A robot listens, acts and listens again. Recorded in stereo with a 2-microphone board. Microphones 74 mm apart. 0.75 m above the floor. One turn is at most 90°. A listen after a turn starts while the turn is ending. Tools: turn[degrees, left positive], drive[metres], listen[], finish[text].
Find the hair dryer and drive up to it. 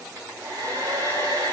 Thought: The hair dryer: about 45° right or 135° right.
Action: turn[-45]
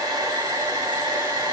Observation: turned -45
Thought: So it is at 85° right.
Action: turn[-85]
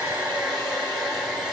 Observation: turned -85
Action: drive[1.0]
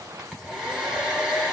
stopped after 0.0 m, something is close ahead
Thought: The hair dryer is now 10° right.
Action: turn[-10]
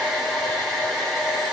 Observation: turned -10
Action: finish[Something is in my way. I am facing the hair dryer but have not reached it.]